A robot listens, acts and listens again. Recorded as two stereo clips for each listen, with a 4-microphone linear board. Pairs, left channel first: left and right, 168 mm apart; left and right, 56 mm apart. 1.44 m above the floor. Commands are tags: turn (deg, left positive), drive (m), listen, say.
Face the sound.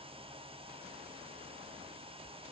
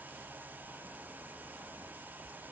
<listen/>
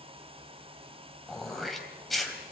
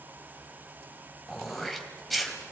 <turn deg="30"/>
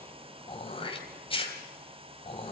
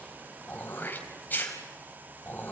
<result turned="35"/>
<turn deg="145"/>
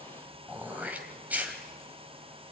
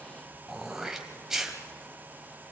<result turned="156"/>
<turn deg="-10"/>
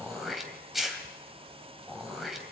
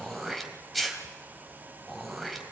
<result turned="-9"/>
<say>Found it: throat clearing, straight ahead, 2 to 4 m away.</say>